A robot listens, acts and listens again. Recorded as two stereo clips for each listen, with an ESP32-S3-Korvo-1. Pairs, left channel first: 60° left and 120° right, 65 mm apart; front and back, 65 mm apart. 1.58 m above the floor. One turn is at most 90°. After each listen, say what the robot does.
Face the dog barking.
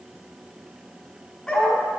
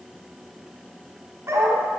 Turn 90° left.
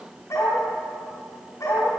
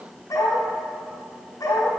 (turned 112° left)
Turn 30° left.
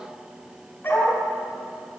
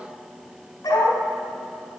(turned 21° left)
Turn 10° left.
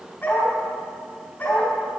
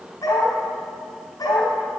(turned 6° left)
Found it: a dog barking, straight ahead, over 4 m away.